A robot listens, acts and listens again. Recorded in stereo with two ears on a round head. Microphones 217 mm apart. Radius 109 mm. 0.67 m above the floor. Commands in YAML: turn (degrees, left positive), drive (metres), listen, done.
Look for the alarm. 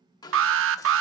turn: -55
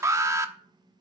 turn: -15
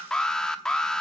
done: "Facing the alarm."